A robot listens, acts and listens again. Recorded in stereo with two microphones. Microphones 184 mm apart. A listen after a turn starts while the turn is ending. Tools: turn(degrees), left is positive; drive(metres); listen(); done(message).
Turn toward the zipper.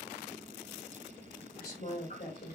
listen()
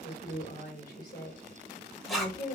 turn(degrees=30)
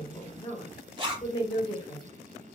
turn(degrees=-25)
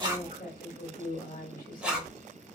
done("Facing the zipper, 1 to 2 m away.")